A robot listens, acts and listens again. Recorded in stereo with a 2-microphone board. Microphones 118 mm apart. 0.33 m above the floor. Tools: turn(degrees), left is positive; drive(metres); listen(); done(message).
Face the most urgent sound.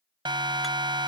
turn(degrees=-40)
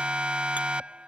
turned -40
turn(degrees=-10)
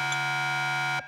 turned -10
done("Facing the siren.")